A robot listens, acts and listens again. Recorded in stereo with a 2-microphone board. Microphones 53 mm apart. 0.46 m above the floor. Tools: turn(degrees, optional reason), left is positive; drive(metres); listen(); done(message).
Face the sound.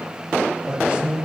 turn(degrees=-25, reason="The man speaking: about 25° right or 155° right.")
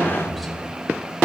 done("Facing the man speaking, 1 to 2 m away.")